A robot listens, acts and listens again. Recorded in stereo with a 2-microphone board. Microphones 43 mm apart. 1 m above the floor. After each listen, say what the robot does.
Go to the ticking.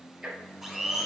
Turn 30° right.
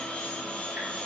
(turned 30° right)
Keep listening.
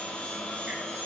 Keep listening.
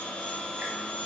I heard ticking, but can't make it out now. It was about 20° left or 140° right. I did not reach it.